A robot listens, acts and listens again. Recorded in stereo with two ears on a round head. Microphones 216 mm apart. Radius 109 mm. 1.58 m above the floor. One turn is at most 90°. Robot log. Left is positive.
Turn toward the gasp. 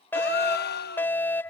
note: The gasp: about 45° left or 135° left.
cmd yaw +45
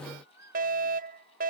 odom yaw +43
cmd idle
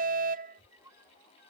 end: I heard a gasp, but can't make it out now. It was about straight ahead or 95° left.